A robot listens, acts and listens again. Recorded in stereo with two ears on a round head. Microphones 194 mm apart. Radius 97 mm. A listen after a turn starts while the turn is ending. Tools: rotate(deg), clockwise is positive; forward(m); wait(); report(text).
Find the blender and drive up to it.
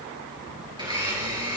rotate(20)
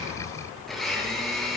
forward(1.0)
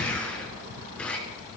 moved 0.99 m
forward(1.0)
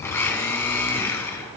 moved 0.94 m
rotate(-10)
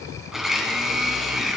forward(1.0)
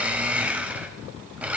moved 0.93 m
forward(1.0)
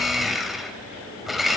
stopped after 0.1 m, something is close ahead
report("I am next to the blender.")